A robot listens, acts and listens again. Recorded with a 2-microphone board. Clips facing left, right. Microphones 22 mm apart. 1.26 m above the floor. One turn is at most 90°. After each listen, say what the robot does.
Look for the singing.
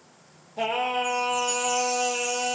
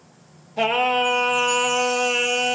Turn 55° right.
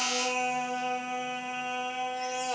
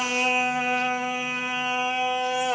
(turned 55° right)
Turn 40° right.
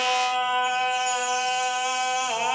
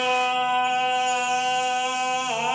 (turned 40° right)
Turn 10° left.
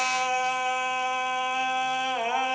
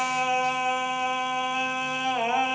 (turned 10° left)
Found it: singing, straight ahead, 2 to 4 m away.